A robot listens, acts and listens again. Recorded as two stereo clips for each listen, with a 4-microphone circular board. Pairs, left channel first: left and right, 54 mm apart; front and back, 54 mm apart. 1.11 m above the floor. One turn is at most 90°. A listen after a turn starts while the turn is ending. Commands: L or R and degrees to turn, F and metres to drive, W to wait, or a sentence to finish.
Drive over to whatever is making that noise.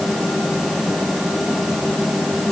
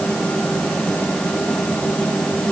W
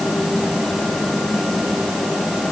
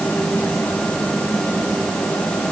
W
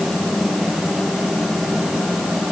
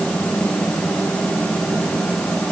I can't make out anything.